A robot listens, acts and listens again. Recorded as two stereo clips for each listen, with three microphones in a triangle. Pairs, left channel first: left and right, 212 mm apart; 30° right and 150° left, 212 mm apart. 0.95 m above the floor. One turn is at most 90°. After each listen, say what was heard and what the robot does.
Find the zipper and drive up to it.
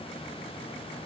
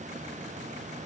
Keep listening.
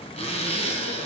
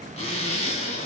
The zipper: 30° left. Turn 30° left.
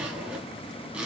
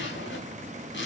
Drive 1.0 m forward.
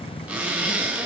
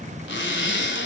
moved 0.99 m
Drive 1.0 m forward.
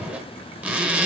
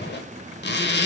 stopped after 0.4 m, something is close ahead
Arrived at the zipper, straight ahead.